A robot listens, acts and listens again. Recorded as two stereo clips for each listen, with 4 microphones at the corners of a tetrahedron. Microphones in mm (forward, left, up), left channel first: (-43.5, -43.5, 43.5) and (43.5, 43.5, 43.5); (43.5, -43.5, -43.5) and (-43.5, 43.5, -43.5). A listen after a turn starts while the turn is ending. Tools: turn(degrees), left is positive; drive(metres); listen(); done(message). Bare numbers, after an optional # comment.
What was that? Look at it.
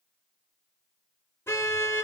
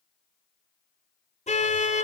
# The car horn: 65° right.
turn(-65)
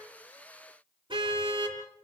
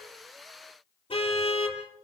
done("Found it: a car horn, straight ahead.")